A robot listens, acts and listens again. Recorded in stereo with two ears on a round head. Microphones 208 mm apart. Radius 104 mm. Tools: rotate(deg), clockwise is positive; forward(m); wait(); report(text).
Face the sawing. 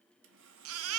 rotate(55)
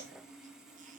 report("Facing the sawing, 1 to 2 m away.")